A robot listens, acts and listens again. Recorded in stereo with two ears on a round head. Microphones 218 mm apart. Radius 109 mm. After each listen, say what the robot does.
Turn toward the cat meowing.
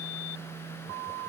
Keep listening.
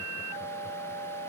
Keep listening.
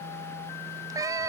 Turn 30° right.
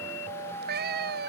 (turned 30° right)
Turn 140° right.
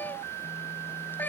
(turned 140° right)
Turn 10° left.
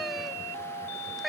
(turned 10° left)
Facing the cat meowing.